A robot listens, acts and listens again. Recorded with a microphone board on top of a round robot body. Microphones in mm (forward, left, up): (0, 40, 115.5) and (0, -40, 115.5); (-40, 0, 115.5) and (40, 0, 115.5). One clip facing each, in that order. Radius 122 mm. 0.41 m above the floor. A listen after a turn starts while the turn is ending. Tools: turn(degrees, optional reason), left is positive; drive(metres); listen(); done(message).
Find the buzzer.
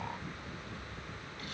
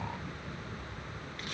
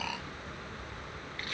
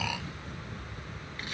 listen()
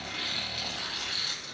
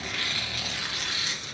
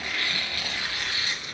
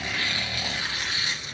listen()
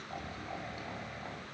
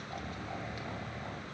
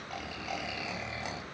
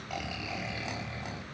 done("I can't make out a buzzer to turn to.")